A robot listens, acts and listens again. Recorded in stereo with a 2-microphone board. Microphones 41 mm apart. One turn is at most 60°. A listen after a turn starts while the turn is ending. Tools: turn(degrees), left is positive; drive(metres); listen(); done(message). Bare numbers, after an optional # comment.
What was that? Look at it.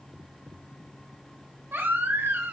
# The baby crying: about 65° right or 115° right.
turn(-60)
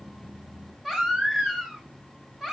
# So it is at 10° right.
turn(-10)
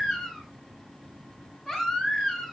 done("Found it: a baby crying, straight ahead.")